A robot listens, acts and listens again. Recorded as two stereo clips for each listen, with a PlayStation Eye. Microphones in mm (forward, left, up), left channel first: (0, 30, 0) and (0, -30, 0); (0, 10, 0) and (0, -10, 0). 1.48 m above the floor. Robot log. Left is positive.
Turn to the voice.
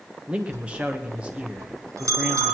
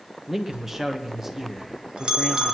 note: The man speaking: about 15° right or 165° right.
cmd yaw -15
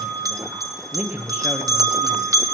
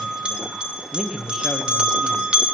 note: So it is at 150° right.
cmd yaw -150
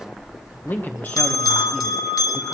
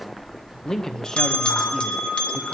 note: The man speaking is now 30° left.
cmd yaw +30
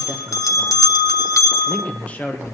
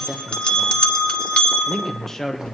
note: The man speaking is now 20° left.
cmd yaw +20
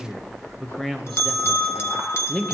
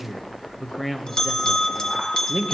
end: Found it: a man speaking, straight ahead, 1 to 2 m away.